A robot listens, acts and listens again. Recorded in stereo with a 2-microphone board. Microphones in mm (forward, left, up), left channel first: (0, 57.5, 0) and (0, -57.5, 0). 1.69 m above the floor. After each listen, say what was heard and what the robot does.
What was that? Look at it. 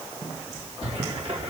The cupboard door: about 60° right or 120° right. Turn 60° right.
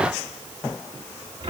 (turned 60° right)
So it is at 55° right. Turn 55° right.
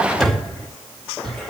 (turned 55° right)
Facing the cupboard door.